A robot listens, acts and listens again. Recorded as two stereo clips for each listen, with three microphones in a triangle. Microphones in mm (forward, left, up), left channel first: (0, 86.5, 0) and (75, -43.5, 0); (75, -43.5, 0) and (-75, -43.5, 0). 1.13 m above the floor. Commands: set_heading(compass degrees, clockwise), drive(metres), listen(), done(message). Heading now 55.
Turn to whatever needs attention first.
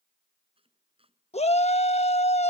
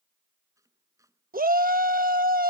set_heading(250)
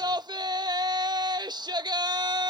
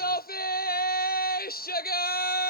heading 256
done("Facing the shout.")